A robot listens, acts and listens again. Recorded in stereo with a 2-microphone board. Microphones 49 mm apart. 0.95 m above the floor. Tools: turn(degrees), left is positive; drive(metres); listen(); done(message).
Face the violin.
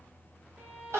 turn(degrees=-50)
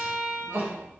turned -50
done("Found it: a violin, straight ahead.")